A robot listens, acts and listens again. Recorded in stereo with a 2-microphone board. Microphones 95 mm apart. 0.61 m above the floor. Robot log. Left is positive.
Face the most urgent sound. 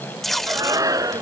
note: The shout: about 35° right or 145° right.
cmd yaw -35
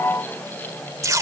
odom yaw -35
cmd idle
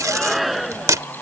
end: Found it: a shout, straight ahead.